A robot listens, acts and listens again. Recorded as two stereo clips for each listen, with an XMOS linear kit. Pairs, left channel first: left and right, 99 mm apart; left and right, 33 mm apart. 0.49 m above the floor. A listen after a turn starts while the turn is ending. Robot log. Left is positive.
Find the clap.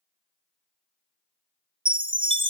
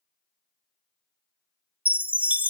cmd idle
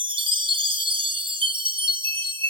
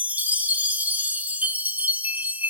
cmd idle
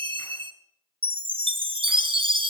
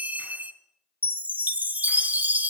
end: I can't make out a clap to turn to.